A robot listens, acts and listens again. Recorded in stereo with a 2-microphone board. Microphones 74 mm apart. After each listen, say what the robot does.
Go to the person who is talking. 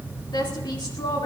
Turn 90° left.
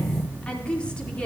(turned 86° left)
Turn 15° left.
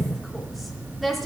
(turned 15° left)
Drive 1.0 m forward.
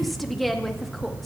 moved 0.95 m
Drive 1.0 m forward.
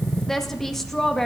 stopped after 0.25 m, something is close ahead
Arrived at the woman speaking, straight ahead.